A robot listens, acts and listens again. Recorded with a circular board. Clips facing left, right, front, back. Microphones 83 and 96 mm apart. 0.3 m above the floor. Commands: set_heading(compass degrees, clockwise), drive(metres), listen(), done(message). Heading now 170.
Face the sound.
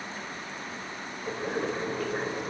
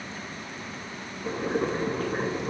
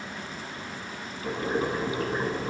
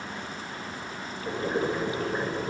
set_heading(210)
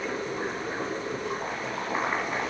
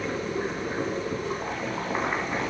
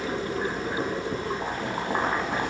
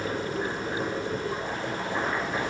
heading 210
done("Facing the boiling.")